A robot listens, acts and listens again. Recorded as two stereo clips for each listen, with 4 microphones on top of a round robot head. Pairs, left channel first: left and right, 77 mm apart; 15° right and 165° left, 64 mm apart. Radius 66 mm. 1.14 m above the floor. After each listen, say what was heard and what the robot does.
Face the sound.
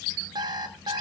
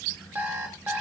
The alarm clock: 125° right. Turn 125° right.
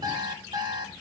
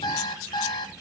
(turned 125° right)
The alarm clock is now 45° right. Turn 45° right.
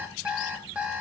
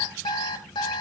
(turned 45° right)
The alarm clock is now 15° right. Turn 15° right.
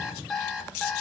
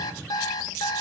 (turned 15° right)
Facing the alarm clock.